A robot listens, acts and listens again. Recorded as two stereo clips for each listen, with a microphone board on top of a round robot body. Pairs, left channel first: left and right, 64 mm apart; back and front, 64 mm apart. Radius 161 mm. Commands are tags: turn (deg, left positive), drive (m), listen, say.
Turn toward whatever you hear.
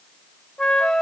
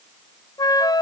<turn deg="170"/>
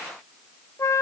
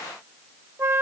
<turn deg="50"/>
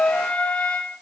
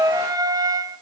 <turn deg="20"/>
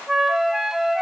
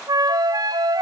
<say>Found it: a flute, straight ahead, 1 to 2 m away.</say>